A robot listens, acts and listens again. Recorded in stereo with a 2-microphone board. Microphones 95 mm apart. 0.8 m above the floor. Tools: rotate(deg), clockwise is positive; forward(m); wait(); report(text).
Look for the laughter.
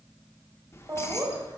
rotate(35)
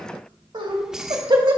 rotate(125)
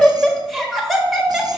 report("Found it: laughter, straight ahead.")